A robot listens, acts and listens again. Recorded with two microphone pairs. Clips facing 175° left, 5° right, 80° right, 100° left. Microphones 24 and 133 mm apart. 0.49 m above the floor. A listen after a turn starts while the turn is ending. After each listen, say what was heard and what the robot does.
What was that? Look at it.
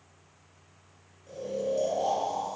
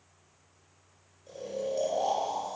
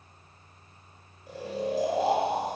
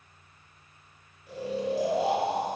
The snoring: 35° right. Turn 35° right.
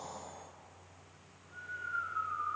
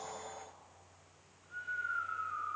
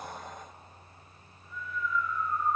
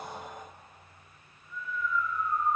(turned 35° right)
The snoring is now 10° left. Turn 10° left.
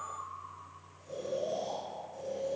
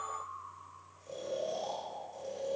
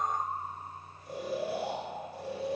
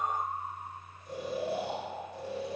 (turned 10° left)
Facing the snoring, 1 to 2 m away.